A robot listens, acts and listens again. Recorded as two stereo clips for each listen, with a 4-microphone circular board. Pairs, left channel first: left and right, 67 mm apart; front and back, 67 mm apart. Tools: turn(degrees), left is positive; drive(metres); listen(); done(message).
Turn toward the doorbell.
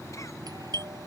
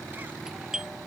turn(degrees=-100)
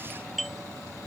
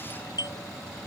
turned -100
done("Found it: a doorbell, straight ahead.")